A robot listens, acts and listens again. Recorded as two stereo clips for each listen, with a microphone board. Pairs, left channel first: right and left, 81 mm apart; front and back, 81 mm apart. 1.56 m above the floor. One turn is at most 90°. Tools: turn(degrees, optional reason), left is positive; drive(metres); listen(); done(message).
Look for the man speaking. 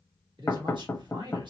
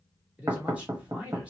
turn(degrees=90, reason="The man speaking: 105° left.")
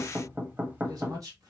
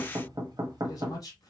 turn(degrees=45, reason="The man speaking is now 45° left.")
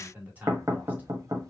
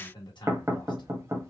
turn(degrees=20, reason="The man speaking is now 20° left.")
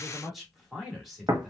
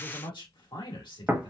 done("Facing the man speaking.")